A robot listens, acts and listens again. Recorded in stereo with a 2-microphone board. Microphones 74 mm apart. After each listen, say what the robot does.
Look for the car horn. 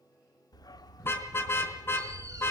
Turn 30° left.
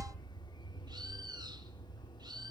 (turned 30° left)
Keep listening.
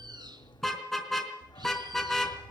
Found it: a car horn, straight ahead, 2 to 4 m away.